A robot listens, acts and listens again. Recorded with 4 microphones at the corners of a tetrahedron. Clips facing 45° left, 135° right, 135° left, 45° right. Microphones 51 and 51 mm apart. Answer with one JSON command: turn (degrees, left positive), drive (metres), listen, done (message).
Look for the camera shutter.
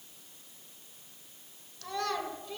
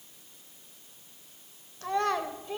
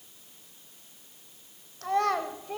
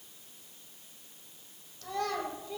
{"listen": true}
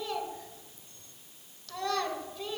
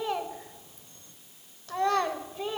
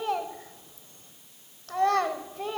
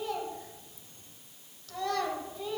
{"listen": true}
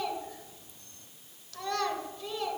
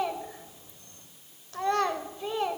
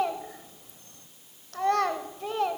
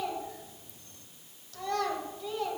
{"done": "I can't make out a camera shutter, only a child speaking."}